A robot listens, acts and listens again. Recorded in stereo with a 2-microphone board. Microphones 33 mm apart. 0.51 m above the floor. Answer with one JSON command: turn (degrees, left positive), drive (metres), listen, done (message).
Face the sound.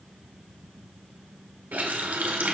{"turn": -70}
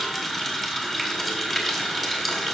{"done": "Facing the running tap, 1 to 2 m away."}